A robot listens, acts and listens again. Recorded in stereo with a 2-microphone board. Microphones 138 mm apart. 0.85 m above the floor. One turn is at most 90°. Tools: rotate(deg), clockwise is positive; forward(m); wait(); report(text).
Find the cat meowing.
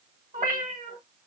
rotate(70)
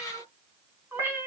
rotate(20)
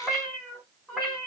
report("Found it: a cat meowing, straight ahead.")